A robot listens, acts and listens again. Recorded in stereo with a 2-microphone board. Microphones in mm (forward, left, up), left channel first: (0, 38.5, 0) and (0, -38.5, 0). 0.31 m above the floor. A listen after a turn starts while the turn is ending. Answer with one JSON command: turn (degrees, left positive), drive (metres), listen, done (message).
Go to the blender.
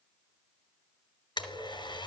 {"turn": 90}
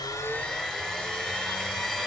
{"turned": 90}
{"turn": 10}
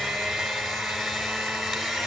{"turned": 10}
{"drive": 1.0}
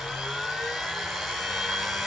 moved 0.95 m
{"drive": 1.0}
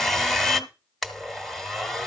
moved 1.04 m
{"drive": 1.0}
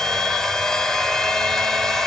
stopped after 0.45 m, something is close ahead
{"done": "Arrived at the blender, straight ahead."}